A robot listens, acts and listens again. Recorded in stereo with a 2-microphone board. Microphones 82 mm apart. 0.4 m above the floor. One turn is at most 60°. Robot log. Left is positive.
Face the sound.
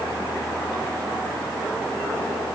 cmd idle
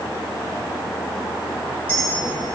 note: The clink: about 15° left or 165° left.
cmd yaw +15
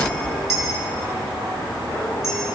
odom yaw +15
end: Found it: a clink, straight ahead, over 4 m away.